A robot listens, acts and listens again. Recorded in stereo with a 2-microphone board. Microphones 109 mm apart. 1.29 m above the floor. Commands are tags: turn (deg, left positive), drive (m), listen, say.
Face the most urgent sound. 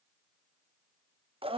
<listen/>
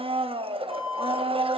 <turn deg="30"/>
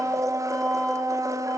<listen/>
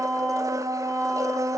<listen/>
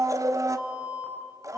<turn deg="-30"/>
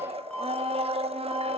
<turn deg="10"/>
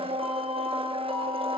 <listen/>
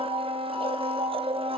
<listen/>
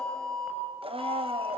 <say>Found it: an alarm, straight ahead, over 4 m away.</say>